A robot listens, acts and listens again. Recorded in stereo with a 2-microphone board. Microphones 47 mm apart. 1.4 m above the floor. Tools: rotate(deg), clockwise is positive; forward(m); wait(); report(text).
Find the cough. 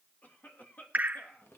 rotate(-40)
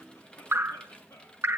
rotate(-100)
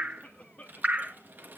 rotate(-30)
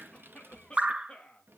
rotate(-25)
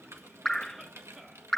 wait()
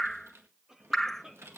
rotate(15)
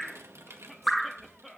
report("Found it: a cough, straight ahead, 2 to 4 m away.")